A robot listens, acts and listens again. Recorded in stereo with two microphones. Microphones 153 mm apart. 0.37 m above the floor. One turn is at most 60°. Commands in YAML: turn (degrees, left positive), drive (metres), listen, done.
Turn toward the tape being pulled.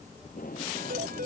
turn: 60
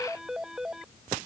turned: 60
listen: true
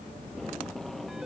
done: "Facing the tape being pulled."